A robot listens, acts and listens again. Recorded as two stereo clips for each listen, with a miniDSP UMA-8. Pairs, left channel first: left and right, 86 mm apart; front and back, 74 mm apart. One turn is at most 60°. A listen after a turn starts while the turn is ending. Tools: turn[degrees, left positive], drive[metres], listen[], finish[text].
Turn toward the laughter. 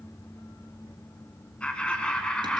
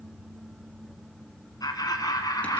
Thought: The laughter: 10° left.
Action: turn[10]
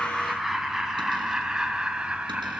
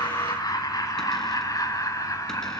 Thought: The laughter is now 15° right.
Action: turn[-15]
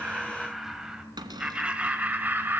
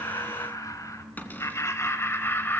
Thought: The laughter is now 35° right.
Action: turn[-35]
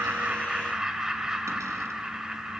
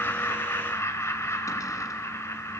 Thought: The laughter is now 10° right.
Action: turn[-10]
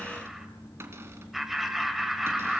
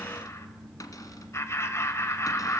Action: finish[Found it: laughter, straight ahead.]